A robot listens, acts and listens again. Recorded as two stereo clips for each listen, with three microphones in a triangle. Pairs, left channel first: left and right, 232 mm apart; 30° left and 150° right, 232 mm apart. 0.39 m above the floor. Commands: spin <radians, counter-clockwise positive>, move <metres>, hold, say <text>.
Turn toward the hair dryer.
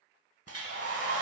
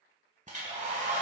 spin -1.57
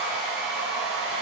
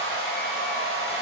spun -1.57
say Facing the hair dryer.